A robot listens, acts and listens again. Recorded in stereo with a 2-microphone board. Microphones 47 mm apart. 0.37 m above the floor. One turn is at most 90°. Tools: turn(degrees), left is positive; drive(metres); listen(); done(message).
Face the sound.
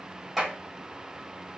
turn(degrees=-30)
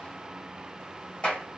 turn(degrees=25)
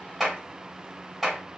done("Found it: a clap, straight ahead.")